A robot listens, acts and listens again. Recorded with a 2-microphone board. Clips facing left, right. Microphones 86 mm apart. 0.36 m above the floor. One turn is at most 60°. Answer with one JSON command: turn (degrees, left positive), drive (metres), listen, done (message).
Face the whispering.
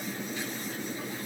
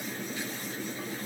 {"listen": true}
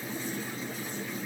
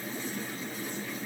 {"listen": true}
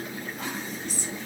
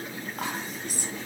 {"turn": -50}
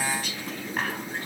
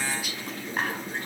{"done": "Found it: whispering, straight ahead."}